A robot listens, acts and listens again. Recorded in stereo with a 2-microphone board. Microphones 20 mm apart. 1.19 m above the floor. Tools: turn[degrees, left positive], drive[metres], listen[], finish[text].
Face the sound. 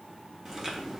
Thought: The chewing: about 25° right or 155° right.
Action: turn[-25]
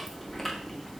Action: finish[Found it: chewing, straight ahead.]